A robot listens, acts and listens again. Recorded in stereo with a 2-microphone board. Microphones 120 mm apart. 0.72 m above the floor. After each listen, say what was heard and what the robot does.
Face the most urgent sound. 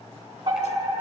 The fire alarm: about 45° right or 135° right. Turn 45° right.
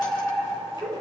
Facing the fire alarm.